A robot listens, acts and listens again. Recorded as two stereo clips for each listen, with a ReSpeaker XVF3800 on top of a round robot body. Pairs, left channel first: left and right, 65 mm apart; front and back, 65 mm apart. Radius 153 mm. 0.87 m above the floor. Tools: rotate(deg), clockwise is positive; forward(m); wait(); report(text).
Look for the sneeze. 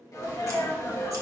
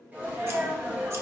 rotate(-115)
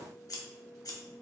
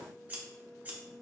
report("Facing where the sneeze came from. I can't hear it now.")